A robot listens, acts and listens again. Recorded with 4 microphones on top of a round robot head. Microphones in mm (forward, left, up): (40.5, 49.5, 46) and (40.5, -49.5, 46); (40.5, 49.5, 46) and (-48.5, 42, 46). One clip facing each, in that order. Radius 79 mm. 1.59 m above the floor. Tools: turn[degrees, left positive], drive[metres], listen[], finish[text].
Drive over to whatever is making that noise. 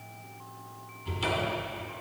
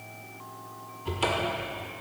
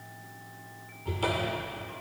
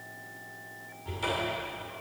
Thought: The cupboard door: 55° right.
Action: turn[-55]
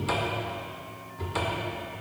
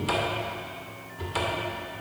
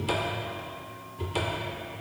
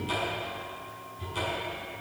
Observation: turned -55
Action: drive[1.0]
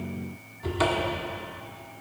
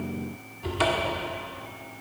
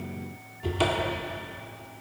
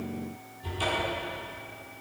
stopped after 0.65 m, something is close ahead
Action: finish[Arrived at the cupboard door, straight ahead.]